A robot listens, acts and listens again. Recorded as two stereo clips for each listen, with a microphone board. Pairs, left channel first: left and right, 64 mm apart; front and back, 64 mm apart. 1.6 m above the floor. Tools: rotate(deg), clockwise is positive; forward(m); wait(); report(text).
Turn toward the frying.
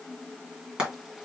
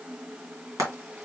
rotate(160)
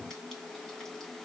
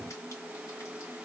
wait()
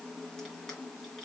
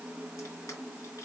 wait()
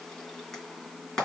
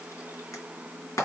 rotate(-15)
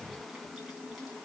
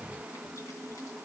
wait()
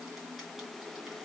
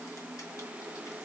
wait()
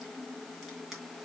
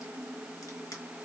report("Facing where the frying came from. I can't hear it now.")